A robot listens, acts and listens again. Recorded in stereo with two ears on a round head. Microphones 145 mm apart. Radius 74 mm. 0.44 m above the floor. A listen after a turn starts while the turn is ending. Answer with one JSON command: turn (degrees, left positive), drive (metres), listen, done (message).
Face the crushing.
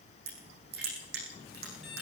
{"turn": -70}
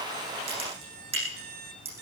{"turn": -35}
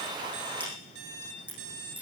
{"turn": -10}
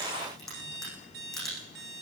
{"done": "Facing the crushing."}